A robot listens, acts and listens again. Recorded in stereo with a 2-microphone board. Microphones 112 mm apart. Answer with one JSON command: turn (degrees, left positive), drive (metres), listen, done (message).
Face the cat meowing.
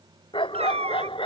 {"turn": -70}
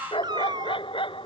{"turn": -40}
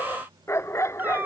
{"turn": -20}
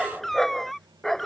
{"done": "Found it: a cat meowing, straight ahead."}